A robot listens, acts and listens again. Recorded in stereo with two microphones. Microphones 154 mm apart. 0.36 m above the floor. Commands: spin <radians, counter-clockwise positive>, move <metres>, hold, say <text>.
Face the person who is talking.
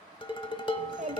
spin -0.96
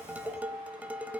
hold
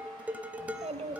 spin -1.05
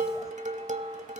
hold
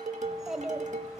say Facing the child speaking.